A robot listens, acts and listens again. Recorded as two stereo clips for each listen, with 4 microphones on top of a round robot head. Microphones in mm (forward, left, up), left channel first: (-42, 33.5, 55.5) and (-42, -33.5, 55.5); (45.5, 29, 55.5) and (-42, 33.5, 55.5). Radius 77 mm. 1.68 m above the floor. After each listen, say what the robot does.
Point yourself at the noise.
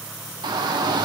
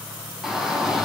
Turn 95° right.
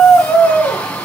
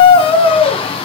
Turn 15° left.
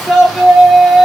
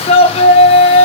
Facing the shout.